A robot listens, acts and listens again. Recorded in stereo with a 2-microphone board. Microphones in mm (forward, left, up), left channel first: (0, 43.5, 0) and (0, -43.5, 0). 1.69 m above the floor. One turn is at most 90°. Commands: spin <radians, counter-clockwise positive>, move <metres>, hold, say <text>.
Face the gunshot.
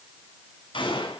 spin 1.31
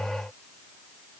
hold
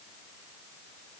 say I heard a gunshot, but can't make it out now. It was about straight ahead or 30° left.